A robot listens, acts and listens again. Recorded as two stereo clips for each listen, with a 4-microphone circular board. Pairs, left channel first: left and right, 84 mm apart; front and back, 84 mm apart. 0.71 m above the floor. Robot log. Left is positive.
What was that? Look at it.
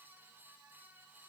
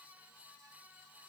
cmd idle
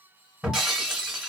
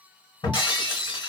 end: Facing the breaking glass, 1 to 2 m away.